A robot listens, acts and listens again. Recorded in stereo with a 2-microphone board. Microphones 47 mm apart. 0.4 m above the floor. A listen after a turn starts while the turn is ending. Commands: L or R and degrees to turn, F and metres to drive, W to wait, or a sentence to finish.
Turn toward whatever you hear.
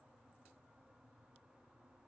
W
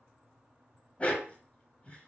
L30
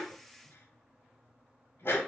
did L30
L120
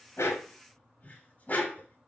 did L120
L35
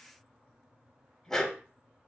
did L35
L15
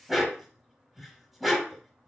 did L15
Found it: a dog barking, straight ahead.